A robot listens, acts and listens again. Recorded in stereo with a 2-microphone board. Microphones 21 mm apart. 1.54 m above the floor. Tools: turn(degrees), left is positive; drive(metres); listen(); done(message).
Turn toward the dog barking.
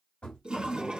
listen()
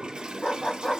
turn(degrees=30)
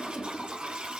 listen()
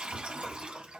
listen()
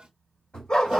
turn(degrees=115)
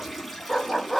turn(degrees=25)
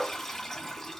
turn(degrees=10)
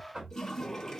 listen()
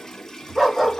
done("Found it: a dog barking, straight ahead.")